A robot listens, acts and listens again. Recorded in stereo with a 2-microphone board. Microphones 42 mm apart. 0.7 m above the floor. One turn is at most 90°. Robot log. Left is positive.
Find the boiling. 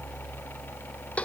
cmd idle
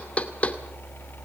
cmd idle
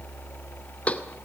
end: I can't make out boiling, only knocking.